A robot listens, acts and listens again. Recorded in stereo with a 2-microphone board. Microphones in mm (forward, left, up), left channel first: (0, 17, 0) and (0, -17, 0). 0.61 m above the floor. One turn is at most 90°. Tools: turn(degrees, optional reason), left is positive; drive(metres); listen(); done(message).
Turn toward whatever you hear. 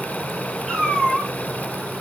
turn(degrees=30)
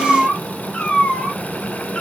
turn(degrees=90, reason="So it is at 140° left.")
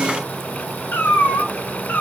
turn(degrees=75, reason="The cat meowing is now 75° left.")
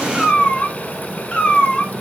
turn(degrees=30, reason="The cat meowing is now 30° left.")
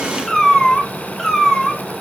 turn(degrees=10, reason="The cat meowing is now 10° left.")
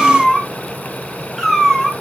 done("Facing the cat meowing.")